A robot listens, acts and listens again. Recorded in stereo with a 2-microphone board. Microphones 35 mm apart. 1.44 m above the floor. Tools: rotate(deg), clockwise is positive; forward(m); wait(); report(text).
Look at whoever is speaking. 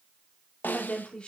rotate(-25)
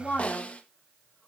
rotate(-130)
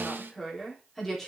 rotate(-10)
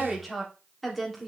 report("Found it: a woman speaking, straight ahead, 2 to 4 m away.")